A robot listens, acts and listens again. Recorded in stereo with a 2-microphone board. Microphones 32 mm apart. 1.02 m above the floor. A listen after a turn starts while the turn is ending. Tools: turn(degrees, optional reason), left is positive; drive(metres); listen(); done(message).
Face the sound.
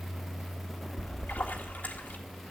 turn(degrees=70, reason="The splash: about 70° left or 110° left.")
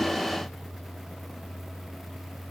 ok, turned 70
listen()
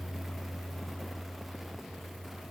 done("I heard a splash, but can't make it out now. It was about straight ahead or 40° left.")